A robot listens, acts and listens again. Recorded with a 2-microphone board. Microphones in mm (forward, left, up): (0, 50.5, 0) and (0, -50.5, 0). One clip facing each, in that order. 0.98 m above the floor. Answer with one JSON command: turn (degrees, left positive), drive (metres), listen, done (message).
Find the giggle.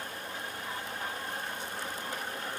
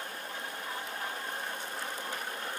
{"listen": true}
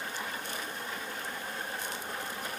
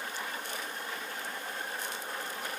{"listen": true}
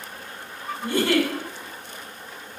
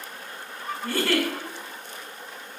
{"turn": 20}
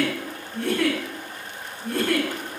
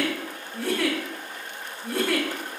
{"done": "Facing the giggle, 1 to 2 m away."}